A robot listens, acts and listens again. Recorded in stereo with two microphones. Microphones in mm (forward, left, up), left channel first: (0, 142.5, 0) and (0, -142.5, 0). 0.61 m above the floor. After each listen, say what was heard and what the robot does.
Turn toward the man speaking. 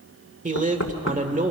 The man speaking: about 25° right or 155° right. Turn 25° right.
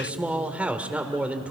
Found it: a man speaking, straight ahead.